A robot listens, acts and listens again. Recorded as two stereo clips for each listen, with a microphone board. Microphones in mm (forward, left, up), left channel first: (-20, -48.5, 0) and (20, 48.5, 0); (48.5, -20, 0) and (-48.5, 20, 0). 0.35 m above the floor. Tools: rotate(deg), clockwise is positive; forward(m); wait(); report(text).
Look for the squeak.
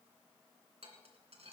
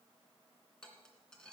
wait()
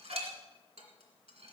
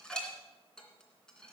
wait()
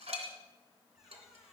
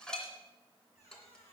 rotate(20)
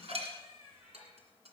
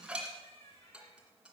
report("Found it: a squeak, straight ahead.")